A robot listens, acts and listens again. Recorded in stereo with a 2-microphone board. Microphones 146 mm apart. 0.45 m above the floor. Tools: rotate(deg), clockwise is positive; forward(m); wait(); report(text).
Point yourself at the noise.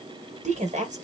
rotate(55)
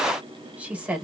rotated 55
rotate(10)
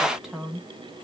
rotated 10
report("Found it: a woman speaking, straight ahead.")